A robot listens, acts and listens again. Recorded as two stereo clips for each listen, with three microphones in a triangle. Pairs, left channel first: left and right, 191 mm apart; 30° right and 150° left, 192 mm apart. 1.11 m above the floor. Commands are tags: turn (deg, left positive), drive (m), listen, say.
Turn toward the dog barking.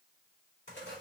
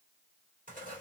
<listen/>
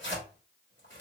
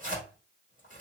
<listen/>
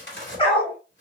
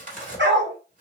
<turn deg="145"/>
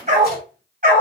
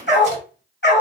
<turn deg="-50"/>
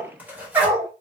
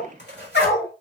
<turn deg="-15"/>
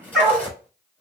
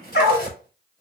<say>Found it: a dog barking, straight ahead.</say>